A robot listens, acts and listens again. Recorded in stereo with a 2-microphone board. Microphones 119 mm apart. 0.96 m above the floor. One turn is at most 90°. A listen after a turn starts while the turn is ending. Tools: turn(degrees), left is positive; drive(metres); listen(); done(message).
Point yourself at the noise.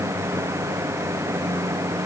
listen()
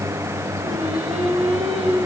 turn(degrees=-55)
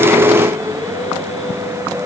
turn(degrees=-65)
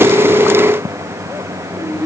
turn(degrees=20)
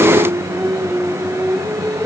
done("Facing the singing.")